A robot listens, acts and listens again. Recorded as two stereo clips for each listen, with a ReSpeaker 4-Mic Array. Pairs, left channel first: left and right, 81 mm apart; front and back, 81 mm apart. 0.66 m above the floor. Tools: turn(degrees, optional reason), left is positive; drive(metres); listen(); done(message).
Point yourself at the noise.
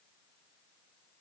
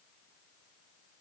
listen()
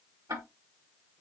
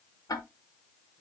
turn(degrees=-45, reason="The ticking: 45° right.")
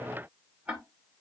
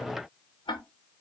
turn(degrees=-15, reason="The ticking is now 15° right.")
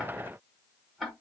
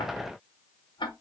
done("Found it: ticking, straight ahead.")